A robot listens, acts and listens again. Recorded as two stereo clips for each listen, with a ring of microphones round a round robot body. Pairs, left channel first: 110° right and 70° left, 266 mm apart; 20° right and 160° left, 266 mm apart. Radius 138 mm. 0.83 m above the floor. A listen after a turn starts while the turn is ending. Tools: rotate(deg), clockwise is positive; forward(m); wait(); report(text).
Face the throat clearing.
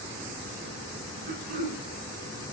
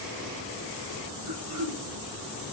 rotate(-125)
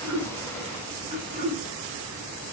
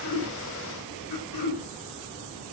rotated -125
report("Found it: throat clearing, straight ahead, 2 to 4 m away.")